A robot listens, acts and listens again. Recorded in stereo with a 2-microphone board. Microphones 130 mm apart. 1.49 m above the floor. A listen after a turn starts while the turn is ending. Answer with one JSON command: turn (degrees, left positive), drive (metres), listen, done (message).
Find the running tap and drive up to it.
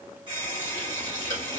{"turn": -40}
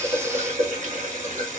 {"turn": -100}
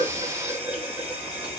{"turn": -20}
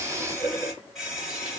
{"drive": 1.0}
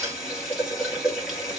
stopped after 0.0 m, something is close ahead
{"done": "Blocked. The running tap is further on, straight ahead."}